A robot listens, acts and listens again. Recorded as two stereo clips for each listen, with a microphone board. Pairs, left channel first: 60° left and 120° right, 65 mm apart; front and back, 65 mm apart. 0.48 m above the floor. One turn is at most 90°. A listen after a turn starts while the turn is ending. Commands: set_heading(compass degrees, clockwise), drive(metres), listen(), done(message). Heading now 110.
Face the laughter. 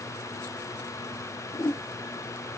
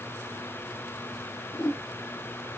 listen()
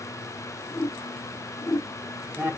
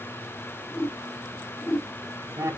set_heading(20)
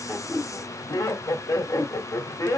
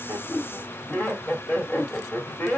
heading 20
set_heading(315)
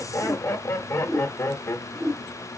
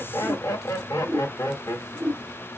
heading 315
set_heading(290)
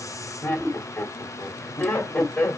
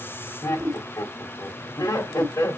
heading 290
done("Facing the laughter, 1 to 2 m away.")